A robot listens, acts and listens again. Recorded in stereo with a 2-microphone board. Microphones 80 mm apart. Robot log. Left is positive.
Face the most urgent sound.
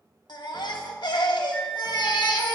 note: The baby crying: about 70° left or 110° left.
cmd yaw +70
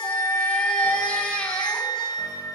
note: So it is at 10° left.
cmd yaw +10
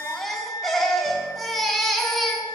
end: Found it: a baby crying, straight ahead.